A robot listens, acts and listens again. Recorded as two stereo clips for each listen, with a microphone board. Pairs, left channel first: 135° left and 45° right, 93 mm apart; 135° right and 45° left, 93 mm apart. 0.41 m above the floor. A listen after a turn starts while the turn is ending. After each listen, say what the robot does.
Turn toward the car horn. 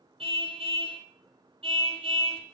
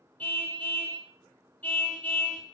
Turn 60° right.
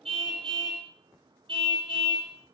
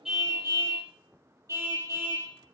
Turn 15° right.
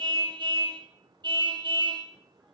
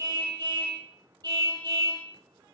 Found it: a car horn, straight ahead, over 4 m away.